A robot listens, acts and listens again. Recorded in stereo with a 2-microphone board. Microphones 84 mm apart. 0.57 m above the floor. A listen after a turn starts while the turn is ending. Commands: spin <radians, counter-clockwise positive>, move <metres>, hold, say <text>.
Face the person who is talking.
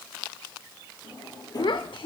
spin 1.22
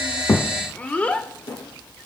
spin 0.35
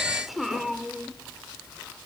say Facing the child speaking, under 1 m away.